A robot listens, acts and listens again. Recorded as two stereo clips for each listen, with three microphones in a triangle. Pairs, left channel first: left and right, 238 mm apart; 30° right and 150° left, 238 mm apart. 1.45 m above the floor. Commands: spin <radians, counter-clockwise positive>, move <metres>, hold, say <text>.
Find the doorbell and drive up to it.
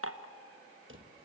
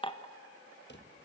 hold
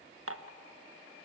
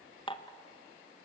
hold
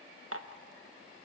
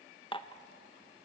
say I can't make out a doorbell, only a drawer and dishes clattering.